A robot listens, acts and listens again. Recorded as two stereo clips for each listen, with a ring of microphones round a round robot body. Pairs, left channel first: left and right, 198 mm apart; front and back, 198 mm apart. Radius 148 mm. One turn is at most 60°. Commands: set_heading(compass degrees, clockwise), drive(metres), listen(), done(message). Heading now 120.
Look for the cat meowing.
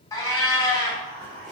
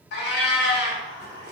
set_heading(100)
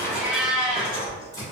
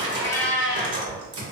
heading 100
done("Found it: a cat meowing, straight ahead.")